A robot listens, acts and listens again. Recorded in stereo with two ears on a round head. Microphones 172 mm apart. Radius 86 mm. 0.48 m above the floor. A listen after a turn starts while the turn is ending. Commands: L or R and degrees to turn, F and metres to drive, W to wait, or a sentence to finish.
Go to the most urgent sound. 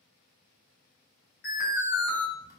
L50
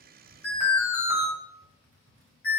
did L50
L10
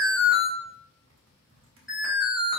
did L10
F1.0
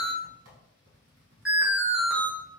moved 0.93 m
F1.0
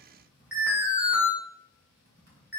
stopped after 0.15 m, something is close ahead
R10
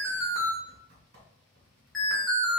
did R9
I am next to the alarm.